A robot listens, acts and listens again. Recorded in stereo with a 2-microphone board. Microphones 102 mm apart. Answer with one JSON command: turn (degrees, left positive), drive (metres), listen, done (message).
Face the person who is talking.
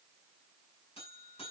{"listen": true}
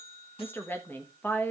{"turn": 20}
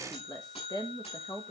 {"turn": 140}
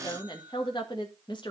{"turn": 50}
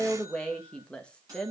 {"turn": 10}
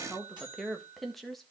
{"done": "Facing the woman speaking, 1 to 2 m away."}